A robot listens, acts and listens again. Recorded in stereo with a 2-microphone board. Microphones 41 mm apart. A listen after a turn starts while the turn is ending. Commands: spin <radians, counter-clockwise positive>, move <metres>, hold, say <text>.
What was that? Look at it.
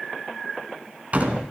spin -0.79
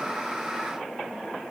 hold
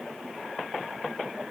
say I heard a door slam, but can't make it out now. It was about straight ahead or 90° right.